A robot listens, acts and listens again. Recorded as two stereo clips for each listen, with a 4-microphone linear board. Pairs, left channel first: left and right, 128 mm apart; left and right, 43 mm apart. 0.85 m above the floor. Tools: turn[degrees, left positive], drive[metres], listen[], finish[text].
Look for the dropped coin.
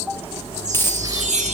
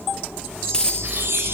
Thought: The dropped coin: about 20° left or 160° left.
Action: turn[20]
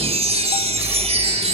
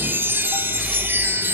Action: listen[]
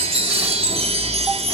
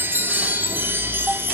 Action: finish[I heard a dropped coin, but can't make it out now. It was about straight ahead or 140° left.]